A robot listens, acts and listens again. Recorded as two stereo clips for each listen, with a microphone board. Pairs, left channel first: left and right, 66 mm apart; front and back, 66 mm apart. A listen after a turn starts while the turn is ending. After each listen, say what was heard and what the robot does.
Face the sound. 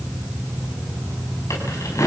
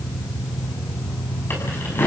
The keys jangling: 55° left. Turn 55° left.
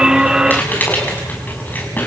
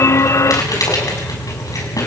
The keys jangling is now 30° left. Turn 30° left.
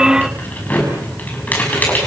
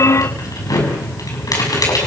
The keys jangling is now 25° left. Turn 25° left.
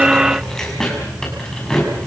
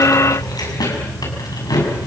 The keys jangling is now 10° left. Turn 10° left.
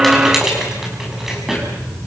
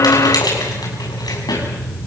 Facing the keys jangling, over 4 m away.